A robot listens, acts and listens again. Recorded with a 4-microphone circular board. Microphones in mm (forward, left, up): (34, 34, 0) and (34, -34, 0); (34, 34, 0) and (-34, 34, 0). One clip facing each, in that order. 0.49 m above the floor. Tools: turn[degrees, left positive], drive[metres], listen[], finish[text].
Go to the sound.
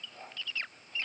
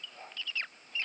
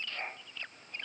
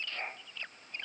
Action: listen[]
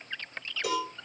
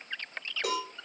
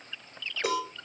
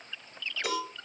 Thought: The cowbell: 50° right.
Action: turn[-50]
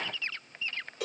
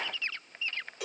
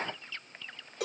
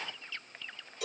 Action: drive[1.0]
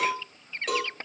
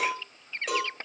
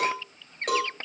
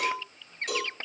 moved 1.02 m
Action: drive[1.0]
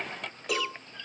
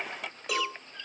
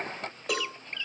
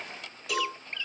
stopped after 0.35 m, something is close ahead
Action: finish[I am next to the cowbell.]